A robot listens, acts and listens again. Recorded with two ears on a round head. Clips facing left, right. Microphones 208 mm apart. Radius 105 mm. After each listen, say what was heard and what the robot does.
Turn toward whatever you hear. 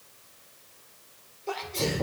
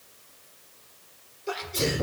The sneeze: about 20° right or 160° right. Turn 20° right.
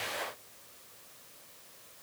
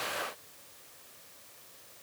Keep listening.
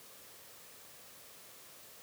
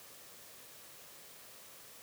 I heard a sneeze, but can't make it out now. It was about straight ahead or 140° right.